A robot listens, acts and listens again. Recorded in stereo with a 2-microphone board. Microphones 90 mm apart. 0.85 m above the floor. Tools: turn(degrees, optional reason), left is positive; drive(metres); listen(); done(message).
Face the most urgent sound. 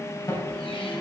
turn(degrees=45, reason="The alarm: about 45° left or 135° left.")
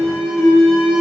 done("Facing the alarm, over 4 m away.")